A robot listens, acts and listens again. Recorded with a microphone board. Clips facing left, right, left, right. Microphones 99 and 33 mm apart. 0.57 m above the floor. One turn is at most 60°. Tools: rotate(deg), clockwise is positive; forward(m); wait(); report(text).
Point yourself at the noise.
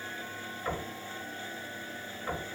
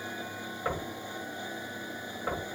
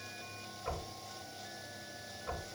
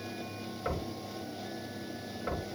rotate(45)
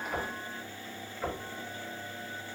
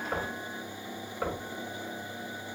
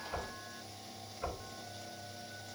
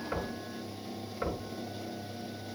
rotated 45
rotate(60)
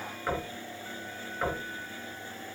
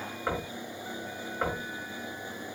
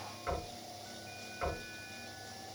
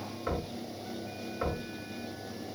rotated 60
rotate(25)
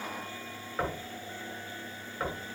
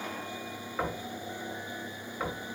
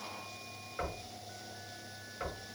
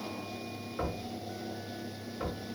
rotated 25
report("Facing the knocking.")